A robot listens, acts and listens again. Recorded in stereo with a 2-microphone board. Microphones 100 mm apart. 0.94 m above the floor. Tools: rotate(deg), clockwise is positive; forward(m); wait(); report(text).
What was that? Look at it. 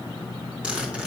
rotate(30)
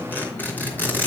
rotate(-20)
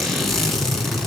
report("Facing the zipper, 2 to 4 m away.")